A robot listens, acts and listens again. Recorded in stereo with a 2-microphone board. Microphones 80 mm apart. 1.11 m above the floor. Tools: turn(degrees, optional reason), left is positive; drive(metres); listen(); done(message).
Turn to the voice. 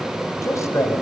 turn(degrees=40, reason="The man speaking: about 40° left or 140° left.")
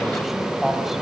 done("Facing the man speaking, over 4 m away.")